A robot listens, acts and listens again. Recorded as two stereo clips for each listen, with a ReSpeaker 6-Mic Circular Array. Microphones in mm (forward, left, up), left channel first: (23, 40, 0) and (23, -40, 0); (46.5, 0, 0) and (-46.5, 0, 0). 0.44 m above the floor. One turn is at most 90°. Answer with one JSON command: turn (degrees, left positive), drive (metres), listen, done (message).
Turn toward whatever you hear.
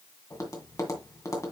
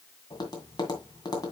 {"turn": 45}
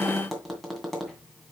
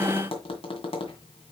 {"done": "Facing the tapping, 2 to 4 m away."}